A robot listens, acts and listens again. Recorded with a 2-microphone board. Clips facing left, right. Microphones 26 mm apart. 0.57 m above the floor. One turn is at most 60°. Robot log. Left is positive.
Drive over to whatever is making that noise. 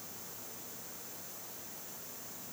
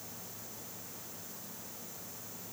cmd idle
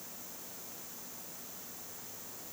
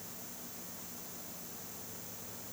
cmd idle
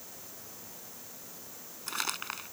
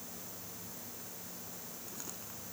note: The crumpling: about 70° left or 110° left.
cmd yaw +60
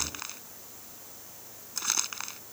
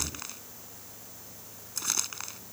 note: So it is at 10° left.
cmd yaw +10
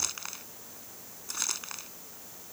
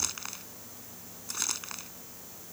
cmd fwd 1.0
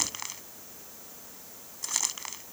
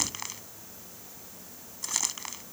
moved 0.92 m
cmd fwd 1.0
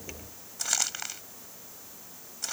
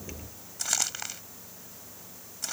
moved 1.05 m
cmd fwd 1.0
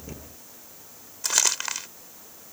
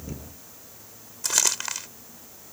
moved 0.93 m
cmd fwd 1.0
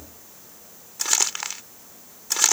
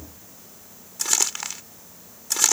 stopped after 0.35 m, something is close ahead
note: The crumpling is now 10° left.
cmd yaw +10
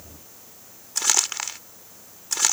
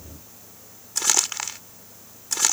end: I am next to the crumpling.